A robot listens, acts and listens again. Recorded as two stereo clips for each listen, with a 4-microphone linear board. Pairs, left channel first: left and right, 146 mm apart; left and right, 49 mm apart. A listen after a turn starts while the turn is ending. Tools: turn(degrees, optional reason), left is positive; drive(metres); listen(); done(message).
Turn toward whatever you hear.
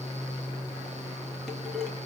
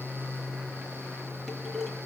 turn(degrees=30)
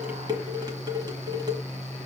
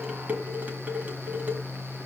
turn(degrees=-30, reason="So it is at 30° right.")
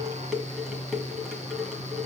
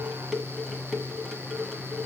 done("Found it: dishes clattering, straight ahead.")